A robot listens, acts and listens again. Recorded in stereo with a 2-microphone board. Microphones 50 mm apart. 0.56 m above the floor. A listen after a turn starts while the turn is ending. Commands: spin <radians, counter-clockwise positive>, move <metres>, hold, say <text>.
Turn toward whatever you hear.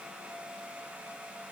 hold
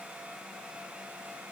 hold
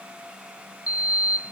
spin -0.61
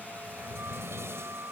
spin -2.01
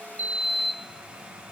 say Found it: a sliding door, straight ahead.